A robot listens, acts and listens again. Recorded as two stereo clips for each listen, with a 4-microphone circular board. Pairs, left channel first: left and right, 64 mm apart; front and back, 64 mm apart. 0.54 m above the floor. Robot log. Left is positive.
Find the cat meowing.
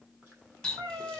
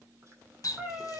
note: The cat meowing: 105° right.
cmd yaw -105
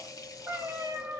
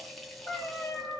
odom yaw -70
note: The cat meowing is now 45° right.
cmd yaw -45
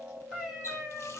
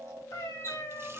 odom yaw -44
note: The cat meowing is now 10° right.
cmd yaw -10
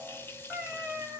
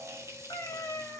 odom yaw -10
note: The cat meowing is now 25° right.
cmd yaw -25
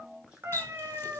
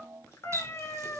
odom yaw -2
note: The cat meowing is now 45° right.
cmd yaw -45
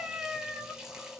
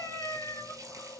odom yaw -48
end: Found it: a cat meowing, straight ahead, 1 to 2 m away.